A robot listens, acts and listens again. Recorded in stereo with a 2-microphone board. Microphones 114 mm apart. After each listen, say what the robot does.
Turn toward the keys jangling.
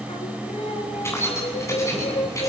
Turn 30° left.
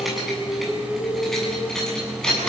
Facing the keys jangling.